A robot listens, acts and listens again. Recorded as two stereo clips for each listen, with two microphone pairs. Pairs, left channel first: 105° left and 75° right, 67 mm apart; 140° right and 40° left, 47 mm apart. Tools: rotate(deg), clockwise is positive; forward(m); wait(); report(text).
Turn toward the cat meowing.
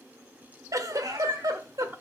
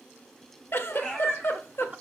rotate(60)
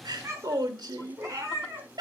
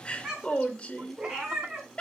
rotate(35)
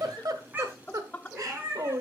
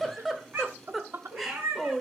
rotate(15)
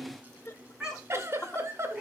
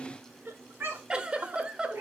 report("Facing the cat meowing, over 4 m away.")